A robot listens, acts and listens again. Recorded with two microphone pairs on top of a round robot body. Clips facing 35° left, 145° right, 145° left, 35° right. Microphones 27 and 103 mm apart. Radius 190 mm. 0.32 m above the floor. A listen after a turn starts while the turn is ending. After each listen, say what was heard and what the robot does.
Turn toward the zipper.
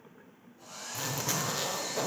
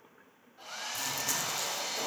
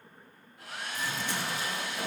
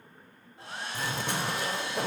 The zipper: 20° right. Turn 20° right.
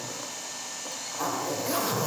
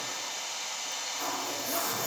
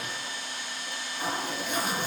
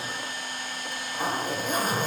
Facing the zipper, 1 to 2 m away.